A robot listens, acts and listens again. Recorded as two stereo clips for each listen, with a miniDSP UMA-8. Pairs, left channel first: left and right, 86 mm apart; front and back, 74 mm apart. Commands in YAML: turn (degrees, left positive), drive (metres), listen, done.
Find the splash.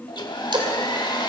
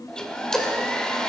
turn: -80
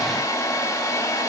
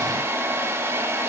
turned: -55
turn: -25
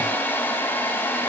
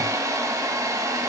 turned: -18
turn: -10
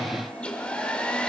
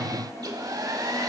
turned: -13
done: "Facing where the splash came from. I can't hear it now."